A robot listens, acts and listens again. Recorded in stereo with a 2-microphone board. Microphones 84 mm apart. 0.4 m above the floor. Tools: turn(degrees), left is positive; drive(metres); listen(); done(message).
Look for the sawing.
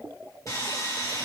turn(degrees=45)
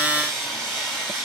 done("Facing the sawing, 2 to 4 m away.")